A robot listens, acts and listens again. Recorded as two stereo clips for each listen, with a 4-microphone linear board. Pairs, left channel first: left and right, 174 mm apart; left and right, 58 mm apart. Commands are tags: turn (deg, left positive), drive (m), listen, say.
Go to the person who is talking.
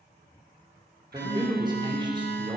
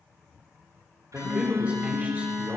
<turn deg="-25"/>
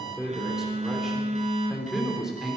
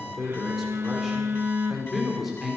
<drive m="1.0"/>
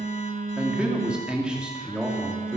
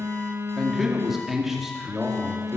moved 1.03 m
<drive m="1.0"/>
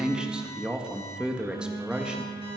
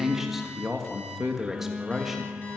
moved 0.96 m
<drive m="1.0"/>
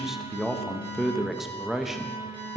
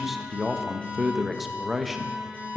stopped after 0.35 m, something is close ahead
<say>Arrived at the man speaking, straight ahead.</say>